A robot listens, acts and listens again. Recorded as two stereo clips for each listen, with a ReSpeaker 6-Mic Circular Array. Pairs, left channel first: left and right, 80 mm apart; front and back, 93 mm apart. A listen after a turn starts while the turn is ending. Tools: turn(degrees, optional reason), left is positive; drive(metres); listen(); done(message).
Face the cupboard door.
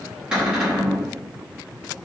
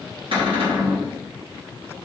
turn(degrees=-170, reason="The cupboard door: 170° right.")
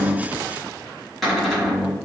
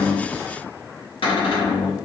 done("Facing the cupboard door.")